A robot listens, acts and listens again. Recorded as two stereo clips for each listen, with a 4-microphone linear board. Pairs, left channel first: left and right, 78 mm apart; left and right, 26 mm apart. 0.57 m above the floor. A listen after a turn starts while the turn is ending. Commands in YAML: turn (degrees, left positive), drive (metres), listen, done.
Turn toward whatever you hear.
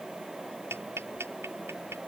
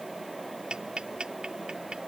turn: -30
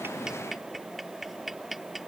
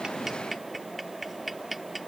done: "Found it: ticking, straight ahead."